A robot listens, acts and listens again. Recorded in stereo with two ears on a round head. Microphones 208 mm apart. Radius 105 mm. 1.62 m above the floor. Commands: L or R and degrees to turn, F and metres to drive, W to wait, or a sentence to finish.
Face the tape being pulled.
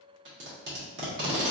R50
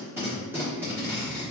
R10
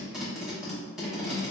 Found it: tape being pulled, straight ahead.